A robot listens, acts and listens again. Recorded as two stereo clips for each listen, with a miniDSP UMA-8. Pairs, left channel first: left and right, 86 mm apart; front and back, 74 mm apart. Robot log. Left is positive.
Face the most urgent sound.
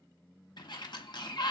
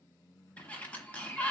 cmd idle
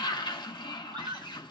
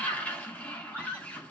note: The scream: 60° right.
cmd yaw -60
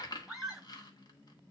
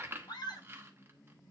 end: Facing the scream.